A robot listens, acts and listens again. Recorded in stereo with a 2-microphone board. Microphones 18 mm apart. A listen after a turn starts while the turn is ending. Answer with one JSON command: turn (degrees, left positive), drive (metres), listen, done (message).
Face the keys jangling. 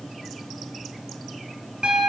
{"listen": true}
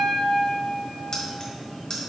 {"turn": 50}
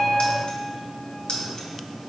{"turn": 55}
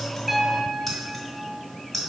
{"done": "Facing the keys jangling."}